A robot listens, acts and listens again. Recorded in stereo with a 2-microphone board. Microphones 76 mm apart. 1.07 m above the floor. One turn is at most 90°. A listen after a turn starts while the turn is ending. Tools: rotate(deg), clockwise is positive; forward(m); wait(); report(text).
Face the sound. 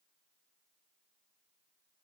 wait()
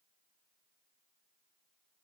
wait()
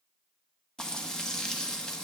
rotate(-30)
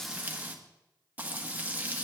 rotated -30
rotate(20)
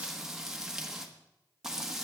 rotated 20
report("Found it: frying, straight ahead, 1 to 2 m away.")